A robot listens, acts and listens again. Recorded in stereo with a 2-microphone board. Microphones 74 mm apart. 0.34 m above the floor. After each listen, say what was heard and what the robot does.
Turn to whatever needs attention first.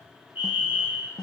The fire alarm: about 25° right or 155° right. Turn 25° right.
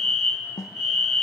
Facing the fire alarm.